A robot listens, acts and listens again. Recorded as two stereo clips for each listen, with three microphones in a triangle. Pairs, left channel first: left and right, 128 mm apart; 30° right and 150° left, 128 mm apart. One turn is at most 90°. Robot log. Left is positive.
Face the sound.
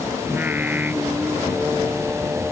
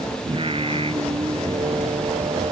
note: The singing: 165° right.
cmd yaw -90
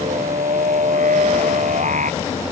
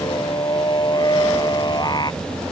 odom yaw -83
note: The singing is now 85° right.
cmd yaw -85
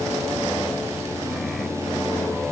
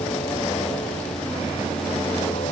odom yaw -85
cmd idle
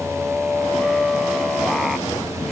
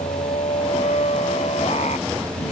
end: Found it: singing, straight ahead.